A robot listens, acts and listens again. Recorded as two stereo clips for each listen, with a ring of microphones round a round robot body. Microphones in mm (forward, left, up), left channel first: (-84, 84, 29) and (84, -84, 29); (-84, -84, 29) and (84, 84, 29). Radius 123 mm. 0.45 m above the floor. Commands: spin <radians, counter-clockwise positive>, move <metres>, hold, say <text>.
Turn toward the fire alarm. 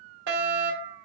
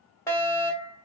spin -1.05
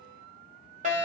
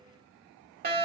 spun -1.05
say Facing the fire alarm.